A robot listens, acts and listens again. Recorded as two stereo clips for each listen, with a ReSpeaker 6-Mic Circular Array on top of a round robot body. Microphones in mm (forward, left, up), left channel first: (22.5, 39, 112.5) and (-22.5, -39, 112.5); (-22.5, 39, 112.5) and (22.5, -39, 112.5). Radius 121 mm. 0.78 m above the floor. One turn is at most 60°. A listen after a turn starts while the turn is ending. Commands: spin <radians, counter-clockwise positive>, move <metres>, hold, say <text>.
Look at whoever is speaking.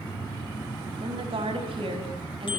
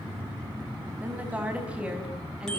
spin -1.05
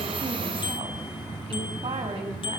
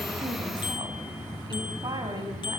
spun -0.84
spin -1.05
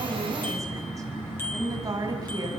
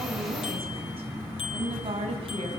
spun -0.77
spin -1.05
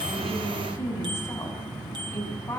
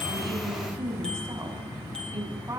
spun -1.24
say Found it: a woman speaking, straight ahead, over 4 m away.